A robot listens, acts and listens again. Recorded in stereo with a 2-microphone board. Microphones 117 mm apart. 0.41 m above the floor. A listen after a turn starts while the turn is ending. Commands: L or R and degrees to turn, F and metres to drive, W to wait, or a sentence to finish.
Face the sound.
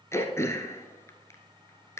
L25
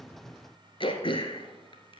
L130
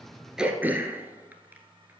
R15
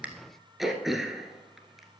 Found it: throat clearing, straight ahead, 1 to 2 m away.